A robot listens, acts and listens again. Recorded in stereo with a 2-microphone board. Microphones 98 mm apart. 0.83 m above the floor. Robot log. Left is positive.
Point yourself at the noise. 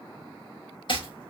note: The chopping: about 55° left or 125° left.
cmd yaw +55
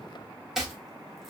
end: Facing the chopping, 1 to 2 m away.